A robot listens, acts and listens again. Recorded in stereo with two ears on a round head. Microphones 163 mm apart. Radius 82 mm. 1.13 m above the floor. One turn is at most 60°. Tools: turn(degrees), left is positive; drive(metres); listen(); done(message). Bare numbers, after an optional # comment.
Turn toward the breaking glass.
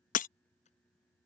# The breaking glass: about 45° left or 135° left.
turn(45)
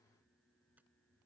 listen()
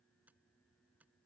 done("I heard breaking glass, but can't make it out now. It was about straight ahead or 90° left.")